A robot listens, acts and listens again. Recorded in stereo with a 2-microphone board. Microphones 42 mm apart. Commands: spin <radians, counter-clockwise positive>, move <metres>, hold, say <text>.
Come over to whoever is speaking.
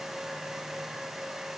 hold
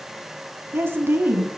spin -1.13
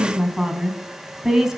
spin -0.17
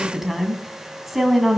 move 1.0
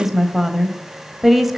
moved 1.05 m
move 1.0
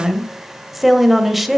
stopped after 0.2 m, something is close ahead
say Arrived at the woman speaking, straight ahead.